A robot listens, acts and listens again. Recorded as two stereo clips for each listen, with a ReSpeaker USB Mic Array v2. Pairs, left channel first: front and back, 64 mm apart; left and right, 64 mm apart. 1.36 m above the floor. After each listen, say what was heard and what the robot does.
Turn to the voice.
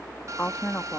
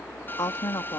The woman speaking: 65° left. Turn 65° left.
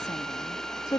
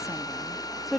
Found it: a woman speaking, straight ahead.